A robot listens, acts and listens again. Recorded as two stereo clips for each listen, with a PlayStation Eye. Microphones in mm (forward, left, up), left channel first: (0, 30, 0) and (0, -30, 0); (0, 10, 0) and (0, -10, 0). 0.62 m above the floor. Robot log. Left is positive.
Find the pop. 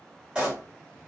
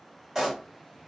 cmd yaw -30
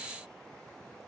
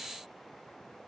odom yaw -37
cmd idle
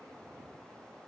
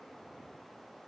end: I heard a pop, but can't make it out now. It was about 25° left or 130° right.